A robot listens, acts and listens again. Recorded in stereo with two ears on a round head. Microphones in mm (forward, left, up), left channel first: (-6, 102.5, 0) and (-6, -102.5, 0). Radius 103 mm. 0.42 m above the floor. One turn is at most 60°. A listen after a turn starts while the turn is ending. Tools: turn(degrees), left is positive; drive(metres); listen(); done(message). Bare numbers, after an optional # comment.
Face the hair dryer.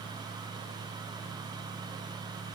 listen()
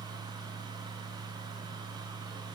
listen()
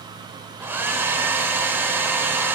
turn(-30)
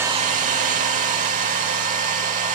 # So it is at 140° right.
turn(-60)
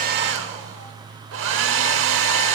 # The hair dryer is now 85° right.
turn(-60)
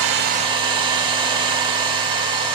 # The hair dryer is now 25° right.
turn(-25)
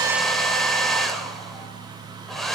done("Found it: a hair dryer, straight ahead.")